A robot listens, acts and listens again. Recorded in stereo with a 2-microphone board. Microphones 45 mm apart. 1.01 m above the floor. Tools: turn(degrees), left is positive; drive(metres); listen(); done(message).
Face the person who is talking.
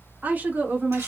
turn(degrees=-40)
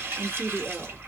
done("Facing the woman speaking, 1 to 2 m away.")